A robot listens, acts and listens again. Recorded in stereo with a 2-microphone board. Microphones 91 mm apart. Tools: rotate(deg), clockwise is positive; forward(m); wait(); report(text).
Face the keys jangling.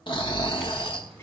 rotate(-30)
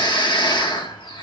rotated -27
wait()
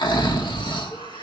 wait()
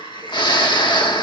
report("I heard keys jangling, but can't make it out now. It was about 25° right or 150° left.")